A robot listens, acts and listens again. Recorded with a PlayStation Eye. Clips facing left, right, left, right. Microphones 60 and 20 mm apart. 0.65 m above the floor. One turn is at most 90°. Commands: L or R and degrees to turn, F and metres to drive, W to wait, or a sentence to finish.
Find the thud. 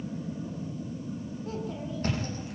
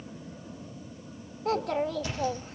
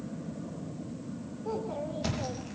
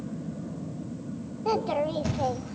L45
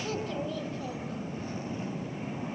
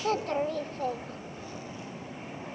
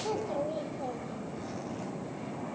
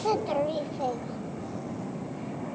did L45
W
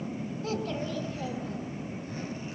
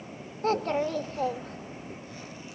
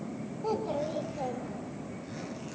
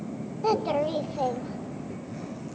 I heard a thud, but can't make it out now. It was about straight ahead or 90° left.